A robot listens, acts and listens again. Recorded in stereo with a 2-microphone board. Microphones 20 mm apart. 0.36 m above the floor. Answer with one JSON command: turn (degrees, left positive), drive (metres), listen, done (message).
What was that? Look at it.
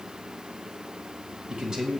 {"turn": -35}
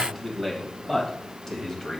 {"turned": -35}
{"turn": 20}
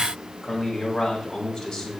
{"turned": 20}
{"turn": 30}
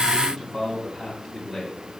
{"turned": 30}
{"done": "Found it: a man speaking, straight ahead, 2 to 4 m away."}